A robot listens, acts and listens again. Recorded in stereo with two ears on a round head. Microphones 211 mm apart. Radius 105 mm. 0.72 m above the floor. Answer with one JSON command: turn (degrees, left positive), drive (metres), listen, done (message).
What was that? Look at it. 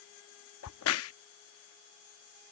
{"turn": 65}
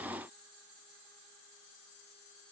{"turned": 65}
{"listen": true}
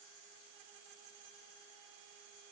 {"done": "I heard a crack, but can't make it out now. It was about straight ahead or 50° left."}